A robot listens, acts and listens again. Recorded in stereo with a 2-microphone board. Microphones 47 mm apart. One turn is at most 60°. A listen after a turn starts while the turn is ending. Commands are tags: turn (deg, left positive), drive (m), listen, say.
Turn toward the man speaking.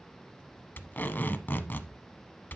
<listen/>
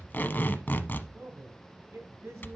<turn deg="-60"/>
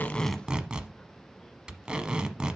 <listen/>
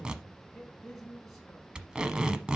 <say>Facing the man speaking, 2 to 4 m away.</say>